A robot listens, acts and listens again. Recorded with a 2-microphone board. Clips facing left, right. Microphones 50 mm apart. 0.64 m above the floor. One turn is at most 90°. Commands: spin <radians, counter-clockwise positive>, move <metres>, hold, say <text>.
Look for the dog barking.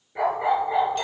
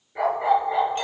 spin -0.52
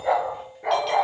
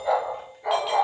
spin 0.44
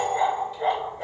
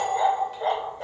spin 0.26
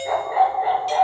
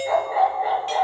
say Found it: a dog barking, straight ahead, 2 to 4 m away.